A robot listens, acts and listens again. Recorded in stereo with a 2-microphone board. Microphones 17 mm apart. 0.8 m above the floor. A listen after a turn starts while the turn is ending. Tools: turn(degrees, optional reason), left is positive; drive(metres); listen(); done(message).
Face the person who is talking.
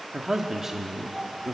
turn(degrees=-30, reason="The man speaking: about 30° right or 150° right.")
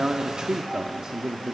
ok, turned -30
turn(degrees=-120, reason="So it is at 120° right.")
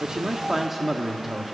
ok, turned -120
turn(degrees=-10, reason="The man speaking is now 10° right.")
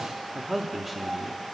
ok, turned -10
done("Found it: a man speaking, straight ahead, 1 to 2 m away.")